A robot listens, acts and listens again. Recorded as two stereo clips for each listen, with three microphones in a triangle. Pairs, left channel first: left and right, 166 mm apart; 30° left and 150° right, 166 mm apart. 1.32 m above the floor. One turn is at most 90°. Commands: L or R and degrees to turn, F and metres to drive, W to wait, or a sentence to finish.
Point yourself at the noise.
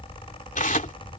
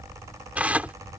L90
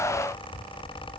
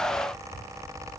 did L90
L40
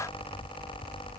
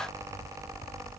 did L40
W
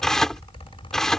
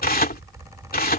Facing the tearing paper.